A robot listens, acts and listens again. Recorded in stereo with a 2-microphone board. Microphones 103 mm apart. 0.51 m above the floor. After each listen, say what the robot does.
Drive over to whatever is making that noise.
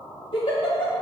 Turn 55° left.
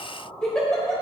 Turn 10° left.
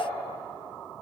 Keep listening.
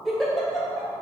Drive 1.0 m forward.
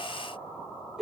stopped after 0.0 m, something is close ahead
Blocked. The giggle is further on, straight ahead.